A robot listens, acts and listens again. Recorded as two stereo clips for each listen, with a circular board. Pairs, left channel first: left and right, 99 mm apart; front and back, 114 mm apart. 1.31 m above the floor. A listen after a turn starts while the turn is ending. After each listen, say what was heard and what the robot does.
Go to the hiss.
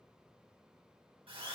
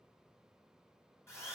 Keep listening.
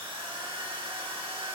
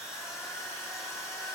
Keep listening.
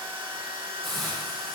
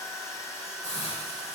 Drive 1.0 m forward.
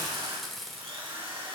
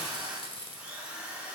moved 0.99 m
Drive 1.0 m forward.
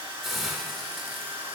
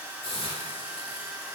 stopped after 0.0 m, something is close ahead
Arrived at the hiss, straight ahead.